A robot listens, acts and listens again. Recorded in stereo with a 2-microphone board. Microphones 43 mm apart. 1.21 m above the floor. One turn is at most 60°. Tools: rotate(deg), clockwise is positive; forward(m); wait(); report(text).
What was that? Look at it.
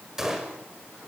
rotate(30)
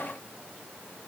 wait()
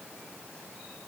report("I heard a gunshot, but can't make it out now. It was about 20° left or 140° right.")